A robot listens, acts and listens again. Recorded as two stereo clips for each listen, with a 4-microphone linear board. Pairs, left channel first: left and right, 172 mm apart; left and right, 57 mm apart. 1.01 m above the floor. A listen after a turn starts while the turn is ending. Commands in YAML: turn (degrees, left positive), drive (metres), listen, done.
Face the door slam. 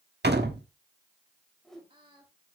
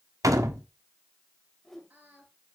turn: -90
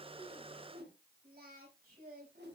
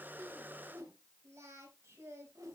done: "Facing where the door slam came from. I can't hear it now."